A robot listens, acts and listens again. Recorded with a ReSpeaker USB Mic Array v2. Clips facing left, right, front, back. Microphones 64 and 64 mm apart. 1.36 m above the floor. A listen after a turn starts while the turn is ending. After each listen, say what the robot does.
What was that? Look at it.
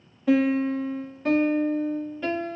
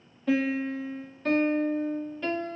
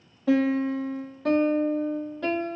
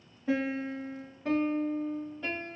Facing the piano.